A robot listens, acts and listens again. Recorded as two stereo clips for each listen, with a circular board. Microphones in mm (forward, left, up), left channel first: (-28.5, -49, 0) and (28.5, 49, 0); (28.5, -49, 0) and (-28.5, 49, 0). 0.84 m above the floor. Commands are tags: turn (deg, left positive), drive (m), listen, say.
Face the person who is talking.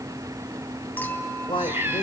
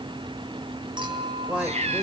<turn deg="-160"/>
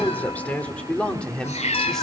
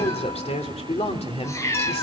<turn deg="-35"/>
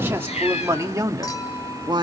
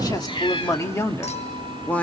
<turn deg="15"/>
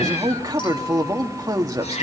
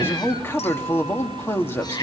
<say>Facing the man speaking.</say>